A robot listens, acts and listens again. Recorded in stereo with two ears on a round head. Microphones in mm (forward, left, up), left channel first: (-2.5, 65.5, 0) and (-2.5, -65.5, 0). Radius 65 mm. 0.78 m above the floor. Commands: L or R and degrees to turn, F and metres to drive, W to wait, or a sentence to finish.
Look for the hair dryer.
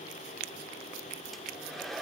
L30
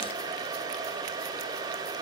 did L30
R30
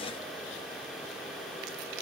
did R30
W
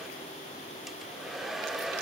Found it: a hair dryer, straight ahead, 2 to 4 m away.